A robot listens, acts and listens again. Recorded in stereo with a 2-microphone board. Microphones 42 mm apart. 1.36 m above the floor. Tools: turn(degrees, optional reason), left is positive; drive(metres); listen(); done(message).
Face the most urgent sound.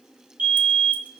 turn(degrees=-50, reason="The fire alarm: about 50° right or 130° right.")
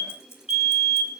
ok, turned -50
done("Facing the fire alarm.")